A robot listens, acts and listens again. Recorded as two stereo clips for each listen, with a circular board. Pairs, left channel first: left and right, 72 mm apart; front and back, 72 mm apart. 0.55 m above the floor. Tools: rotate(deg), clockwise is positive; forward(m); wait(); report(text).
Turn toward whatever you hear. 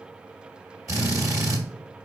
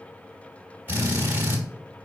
rotate(120)
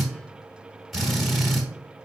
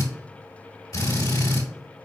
report("Found it: a drill, straight ahead, 1 to 2 m away.")